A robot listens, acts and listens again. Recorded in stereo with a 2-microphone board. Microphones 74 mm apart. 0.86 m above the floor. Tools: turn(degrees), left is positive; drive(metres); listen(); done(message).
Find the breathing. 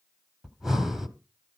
turn(degrees=-30)
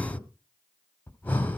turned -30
turn(degrees=25)
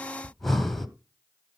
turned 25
done("Found it: breathing, straight ahead, 1 to 2 m away.")